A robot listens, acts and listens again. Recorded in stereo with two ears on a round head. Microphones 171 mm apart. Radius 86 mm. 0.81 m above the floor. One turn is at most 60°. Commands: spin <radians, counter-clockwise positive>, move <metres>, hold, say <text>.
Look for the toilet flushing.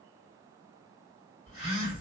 hold
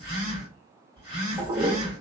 spin -0.26
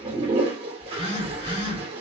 spin -1.05
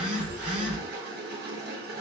spin -1.05
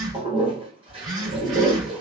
spin -0.61
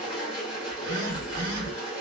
say Facing the toilet flushing, 1 to 2 m away.